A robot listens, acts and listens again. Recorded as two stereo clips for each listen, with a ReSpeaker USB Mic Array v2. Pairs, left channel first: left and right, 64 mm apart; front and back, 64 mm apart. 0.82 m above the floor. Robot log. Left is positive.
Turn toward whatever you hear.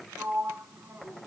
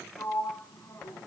note: The sliding door: 30° right.
cmd yaw -30
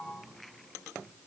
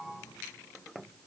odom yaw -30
cmd idle
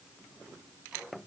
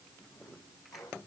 note: The sliding door is now 10° right.
cmd yaw -10
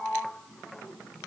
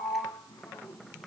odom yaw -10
end: Facing the sliding door, over 4 m away.